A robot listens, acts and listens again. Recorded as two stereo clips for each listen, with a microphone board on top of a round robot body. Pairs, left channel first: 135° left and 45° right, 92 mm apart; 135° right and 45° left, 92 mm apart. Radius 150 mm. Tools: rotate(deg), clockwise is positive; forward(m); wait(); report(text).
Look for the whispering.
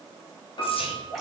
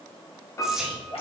rotate(-130)
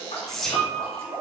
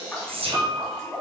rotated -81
rotate(-50)
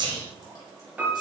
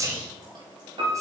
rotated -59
rotate(10)
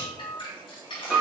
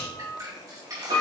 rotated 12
report("Facing the whispering.")